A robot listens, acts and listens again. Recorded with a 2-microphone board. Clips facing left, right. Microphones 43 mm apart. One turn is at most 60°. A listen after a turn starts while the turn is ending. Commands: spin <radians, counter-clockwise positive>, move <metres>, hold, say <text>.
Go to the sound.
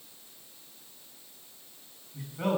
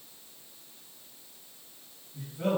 spin 1.05
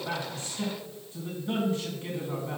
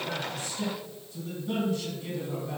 spin 0.52
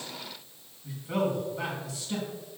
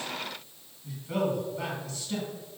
spin 0.17
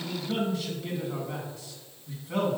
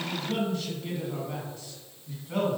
move 1.0
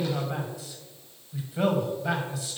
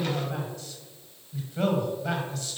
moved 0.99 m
spin 0.17
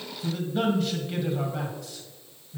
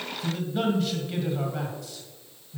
move 1.0
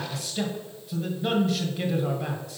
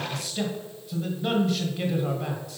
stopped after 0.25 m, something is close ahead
say Arrived at the man speaking, straight ahead.